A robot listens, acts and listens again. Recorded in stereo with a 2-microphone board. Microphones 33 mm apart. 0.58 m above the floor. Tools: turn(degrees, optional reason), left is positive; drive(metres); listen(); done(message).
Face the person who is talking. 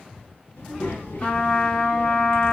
turn(degrees=90)
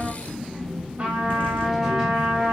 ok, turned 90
turn(degrees=-10, reason="So it is at 10° right.")
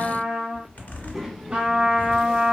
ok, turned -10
done("Facing the child speaking.")